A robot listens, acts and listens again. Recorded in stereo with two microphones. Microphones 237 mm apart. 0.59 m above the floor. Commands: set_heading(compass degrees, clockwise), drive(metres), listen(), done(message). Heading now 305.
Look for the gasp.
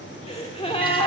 set_heading(280)
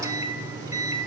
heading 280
listen()
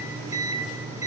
done("I heard a gasp, but can't make it out now. It was about straight ahead or 130° left.")